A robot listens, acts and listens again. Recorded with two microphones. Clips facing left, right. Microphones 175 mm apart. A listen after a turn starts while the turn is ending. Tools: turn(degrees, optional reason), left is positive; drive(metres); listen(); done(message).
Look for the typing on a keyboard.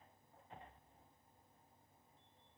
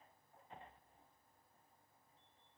listen()
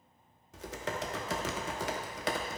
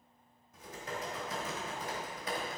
turn(degrees=90)
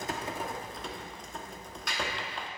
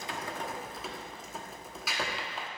done("Facing the typing on a keyboard, under 1 m away.")